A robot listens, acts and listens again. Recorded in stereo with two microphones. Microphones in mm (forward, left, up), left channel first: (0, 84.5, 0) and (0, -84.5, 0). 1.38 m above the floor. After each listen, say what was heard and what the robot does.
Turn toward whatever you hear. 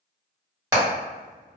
The hammering: about 20° right or 160° right. Turn 20° right.
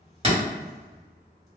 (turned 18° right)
So it is at 145° right. Turn 145° right.
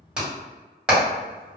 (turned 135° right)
Found it: hammering, straight ahead, 1 to 2 m away.